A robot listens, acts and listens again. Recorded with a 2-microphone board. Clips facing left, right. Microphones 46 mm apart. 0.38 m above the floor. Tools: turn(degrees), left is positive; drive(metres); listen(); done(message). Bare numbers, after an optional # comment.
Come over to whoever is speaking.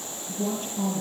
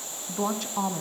# The woman speaking: about 75° right or 105° right.
turn(-75)
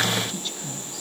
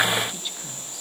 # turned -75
# So it is at 10° right.
turn(-10)
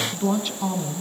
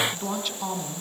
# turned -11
drive(1.0)
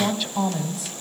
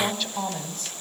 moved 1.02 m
# The woman speaking is now 10° left.
turn(10)
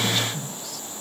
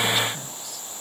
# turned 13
drive(1.0)
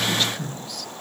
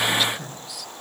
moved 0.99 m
drive(1.0)
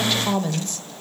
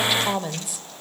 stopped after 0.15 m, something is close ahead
# The woman speaking is now 10° right.
turn(-10)
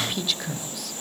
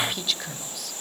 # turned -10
done("Arrived at the woman speaking, straight ahead.")